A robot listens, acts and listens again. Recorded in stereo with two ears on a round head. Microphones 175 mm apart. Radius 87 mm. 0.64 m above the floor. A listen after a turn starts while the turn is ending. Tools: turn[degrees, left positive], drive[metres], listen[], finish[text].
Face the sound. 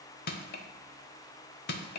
Thought: The crushing: about 50° left or 130° left.
Action: turn[50]
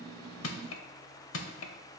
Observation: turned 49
Thought: So it is at 80° left.
Action: turn[80]
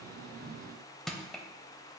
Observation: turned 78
Action: finish[Facing the crushing.]